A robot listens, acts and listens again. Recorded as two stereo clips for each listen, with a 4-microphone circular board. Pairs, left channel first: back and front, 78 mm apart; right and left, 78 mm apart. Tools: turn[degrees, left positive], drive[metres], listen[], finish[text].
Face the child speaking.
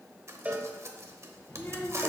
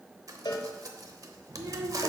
Thought: The child speaking: 120° left.
Action: turn[120]
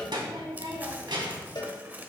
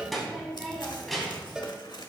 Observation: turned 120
Action: finish[Facing the child speaking.]